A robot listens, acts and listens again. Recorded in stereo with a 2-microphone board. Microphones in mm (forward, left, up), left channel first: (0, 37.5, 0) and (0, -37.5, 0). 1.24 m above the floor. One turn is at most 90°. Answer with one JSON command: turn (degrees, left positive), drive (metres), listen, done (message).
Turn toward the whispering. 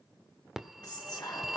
{"turn": 65}
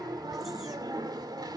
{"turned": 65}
{"listen": true}
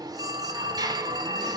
{"listen": true}
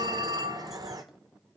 {"done": "I heard whispering, but can't make it out now. It was about straight ahead or 50° left."}